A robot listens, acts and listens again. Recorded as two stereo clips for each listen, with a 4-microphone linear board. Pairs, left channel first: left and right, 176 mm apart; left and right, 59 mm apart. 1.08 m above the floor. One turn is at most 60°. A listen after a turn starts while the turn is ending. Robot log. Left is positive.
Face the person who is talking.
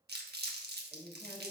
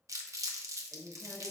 cmd yaw +30
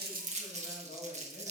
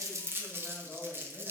note: So it is at 140° left.
cmd yaw +60
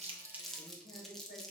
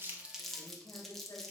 note: The woman speaking is now 100° left.
cmd yaw +60
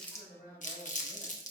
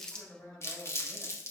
note: The woman speaking is now 55° left.
cmd yaw +55
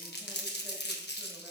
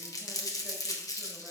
cmd idle
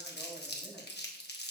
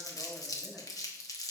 cmd idle
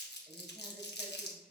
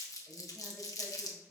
end: Facing the woman speaking, 2 to 4 m away.